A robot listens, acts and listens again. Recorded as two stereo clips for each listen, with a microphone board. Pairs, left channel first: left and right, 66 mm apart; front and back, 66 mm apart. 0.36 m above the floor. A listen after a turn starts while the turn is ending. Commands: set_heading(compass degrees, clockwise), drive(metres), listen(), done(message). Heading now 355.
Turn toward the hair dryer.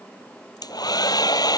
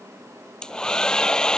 set_heading(280)
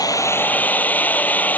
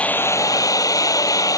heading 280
set_heading(255)
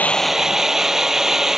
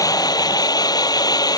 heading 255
done("Facing the hair dryer.")